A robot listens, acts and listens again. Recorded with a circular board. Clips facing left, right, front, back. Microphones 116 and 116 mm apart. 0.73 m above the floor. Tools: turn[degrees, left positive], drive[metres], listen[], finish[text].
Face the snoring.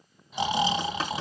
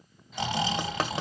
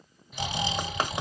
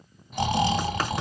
Thought: The snoring: 160° left.
Action: turn[160]
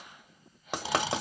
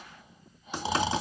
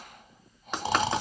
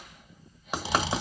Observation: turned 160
Thought: The snoring is now 30° right.
Action: turn[-30]
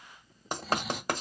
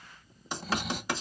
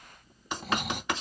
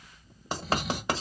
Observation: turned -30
Action: finish[Found it: snoring, straight ahead, 1 to 2 m away.]